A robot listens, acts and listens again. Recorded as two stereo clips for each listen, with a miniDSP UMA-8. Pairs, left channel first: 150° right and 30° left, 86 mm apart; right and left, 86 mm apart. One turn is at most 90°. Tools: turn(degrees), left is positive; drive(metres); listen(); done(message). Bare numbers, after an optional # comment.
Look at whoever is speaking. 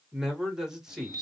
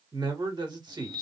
# The man speaking: 115° left.
turn(90)
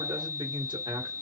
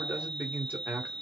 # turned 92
# The man speaking is now 20° left.
turn(20)
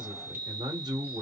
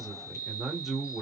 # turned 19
done("Found it: a man speaking, straight ahead, 1 to 2 m away.")